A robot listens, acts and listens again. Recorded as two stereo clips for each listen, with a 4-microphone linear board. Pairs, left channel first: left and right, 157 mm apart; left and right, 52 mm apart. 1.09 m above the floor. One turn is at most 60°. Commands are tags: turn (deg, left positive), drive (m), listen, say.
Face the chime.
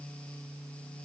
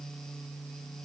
<listen/>
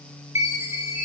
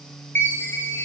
<turn deg="45"/>
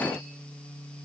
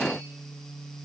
<listen/>
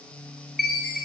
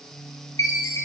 <turn deg="60"/>
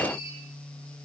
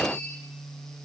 <turn deg="30"/>
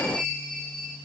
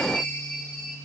<say>Found it: a chime, straight ahead.</say>